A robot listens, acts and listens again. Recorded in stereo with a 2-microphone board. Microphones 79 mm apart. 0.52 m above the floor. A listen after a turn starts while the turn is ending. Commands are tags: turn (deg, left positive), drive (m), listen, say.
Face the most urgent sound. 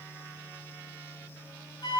<listen/>
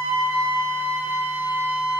<listen/>
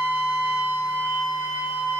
<say>I can't make out anything urgent to turn to.</say>